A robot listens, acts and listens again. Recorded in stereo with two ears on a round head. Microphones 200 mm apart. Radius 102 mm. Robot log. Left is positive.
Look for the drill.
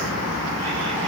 cmd idle
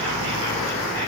cmd idle
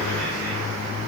end: I can't make out a drill to turn to.